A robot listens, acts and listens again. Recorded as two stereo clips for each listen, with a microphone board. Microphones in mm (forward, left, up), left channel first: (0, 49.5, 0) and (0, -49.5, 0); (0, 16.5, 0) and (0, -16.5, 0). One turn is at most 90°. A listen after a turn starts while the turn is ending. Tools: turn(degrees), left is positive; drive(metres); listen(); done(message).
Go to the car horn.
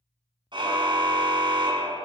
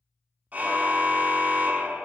turn(degrees=-50)
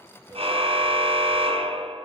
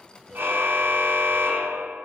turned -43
turn(degrees=-85)
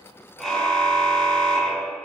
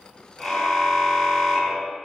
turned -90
drive(metres=1.0)
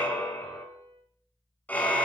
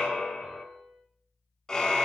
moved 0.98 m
turn(degrees=15)
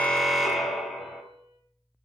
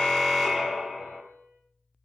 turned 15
drive(metres=1.0)
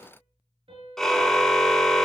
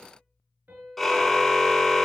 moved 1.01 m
drive(metres=1.0)
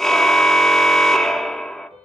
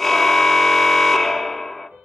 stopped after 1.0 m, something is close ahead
done("I am next to the car horn.")